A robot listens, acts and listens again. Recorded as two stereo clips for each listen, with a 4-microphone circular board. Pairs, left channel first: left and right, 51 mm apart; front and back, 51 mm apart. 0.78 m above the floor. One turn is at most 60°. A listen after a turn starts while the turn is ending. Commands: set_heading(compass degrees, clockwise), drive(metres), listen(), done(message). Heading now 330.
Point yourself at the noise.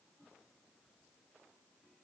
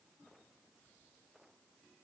listen()
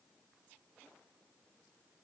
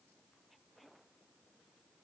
listen()
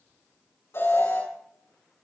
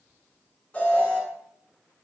set_heading(270)
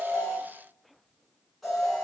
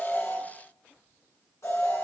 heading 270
done("Facing the alarm, over 4 m away.")